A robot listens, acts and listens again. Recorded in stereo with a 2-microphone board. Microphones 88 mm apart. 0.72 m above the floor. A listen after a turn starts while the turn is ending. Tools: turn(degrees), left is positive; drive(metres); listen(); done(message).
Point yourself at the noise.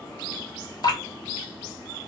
turn(degrees=50)
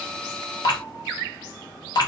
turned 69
turn(degrees=60)
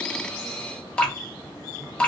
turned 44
turn(degrees=15)
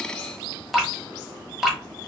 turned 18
done("Facing the dripping, 1 to 2 m away.")